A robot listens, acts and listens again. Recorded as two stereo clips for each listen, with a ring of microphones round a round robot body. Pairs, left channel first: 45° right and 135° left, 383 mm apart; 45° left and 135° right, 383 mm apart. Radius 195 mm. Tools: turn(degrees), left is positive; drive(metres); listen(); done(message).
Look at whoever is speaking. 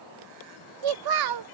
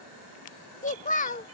turn(degrees=115)
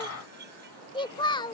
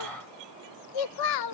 turn(degrees=30)
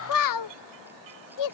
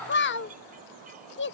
turn(degrees=-15)
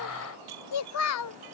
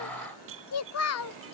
done("Facing the child speaking.")